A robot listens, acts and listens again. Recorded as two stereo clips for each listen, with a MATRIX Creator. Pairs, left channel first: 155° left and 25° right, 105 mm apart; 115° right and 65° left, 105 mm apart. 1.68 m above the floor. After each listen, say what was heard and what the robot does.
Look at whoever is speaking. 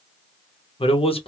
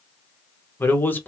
The man speaking: 175° left. Turn 175° left.
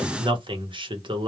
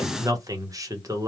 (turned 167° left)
The man speaking is now 10° left. Turn 10° left.
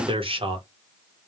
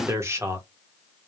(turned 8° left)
Facing the man speaking, under 1 m away.